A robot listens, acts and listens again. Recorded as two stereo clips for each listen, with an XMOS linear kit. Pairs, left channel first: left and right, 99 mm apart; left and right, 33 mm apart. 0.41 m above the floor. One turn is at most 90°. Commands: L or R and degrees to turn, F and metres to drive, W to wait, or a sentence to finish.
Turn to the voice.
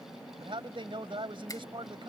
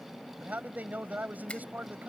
R60
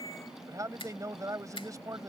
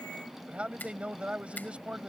R40
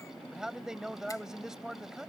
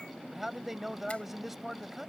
Found it: a man speaking, straight ahead.